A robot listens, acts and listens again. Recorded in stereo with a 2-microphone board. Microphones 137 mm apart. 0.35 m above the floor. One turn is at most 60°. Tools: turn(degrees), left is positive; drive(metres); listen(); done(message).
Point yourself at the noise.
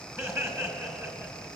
turn(degrees=-20)
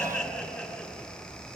done("Facing the laughter, over 4 m away.")